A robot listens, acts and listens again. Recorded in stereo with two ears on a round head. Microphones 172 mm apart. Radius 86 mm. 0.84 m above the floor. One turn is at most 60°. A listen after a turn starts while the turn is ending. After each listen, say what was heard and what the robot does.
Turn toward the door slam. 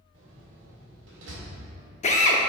The door slam: about 65° right or 115° right. Turn 60° right.
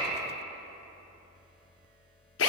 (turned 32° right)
Keep listening.
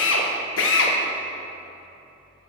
I heard a door slam, but can't make it out now. It was about 35° right or 85° right.